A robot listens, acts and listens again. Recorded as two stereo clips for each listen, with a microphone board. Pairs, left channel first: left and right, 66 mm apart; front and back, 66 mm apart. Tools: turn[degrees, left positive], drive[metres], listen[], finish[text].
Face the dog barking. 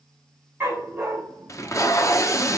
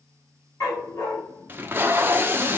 Thought: The dog barking: 30° right.
Action: turn[-30]
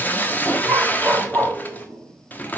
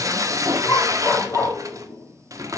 Action: finish[Found it: a dog barking, straight ahead, 1 to 2 m away.]